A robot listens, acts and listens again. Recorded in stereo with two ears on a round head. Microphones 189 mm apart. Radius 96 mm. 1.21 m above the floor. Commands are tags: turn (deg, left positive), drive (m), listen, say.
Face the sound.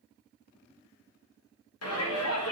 <turn deg="90"/>
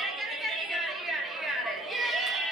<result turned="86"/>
<say>Found it: a shout, straight ahead.</say>